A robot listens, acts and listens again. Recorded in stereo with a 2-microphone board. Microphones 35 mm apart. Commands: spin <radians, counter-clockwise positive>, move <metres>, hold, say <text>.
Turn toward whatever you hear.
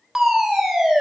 spin -0.52
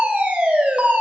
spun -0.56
spin -2.36
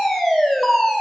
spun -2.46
say Facing the fire alarm, 2 to 4 m away.